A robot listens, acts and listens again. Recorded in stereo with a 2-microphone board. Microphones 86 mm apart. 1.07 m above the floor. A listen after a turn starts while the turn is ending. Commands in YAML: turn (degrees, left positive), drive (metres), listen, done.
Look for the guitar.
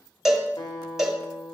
turn: 55
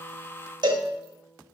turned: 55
done: "Found it: a guitar, straight ahead, 1 to 2 m away."